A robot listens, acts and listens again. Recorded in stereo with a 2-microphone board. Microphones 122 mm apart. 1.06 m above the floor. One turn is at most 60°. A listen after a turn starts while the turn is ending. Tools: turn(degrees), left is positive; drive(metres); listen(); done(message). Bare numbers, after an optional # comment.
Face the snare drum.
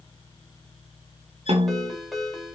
# The snare drum: about 60° right or 120° right.
turn(-60)
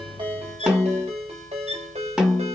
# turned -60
done("Facing the snare drum, 2 to 4 m away.")